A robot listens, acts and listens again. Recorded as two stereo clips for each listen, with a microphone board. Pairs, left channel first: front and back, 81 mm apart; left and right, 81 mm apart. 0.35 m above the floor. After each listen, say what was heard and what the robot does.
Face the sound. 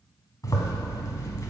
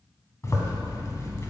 The zipper: 40° left. Turn 40° left.
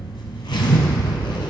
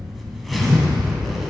Found it: a zipper, straight ahead, 1 to 2 m away.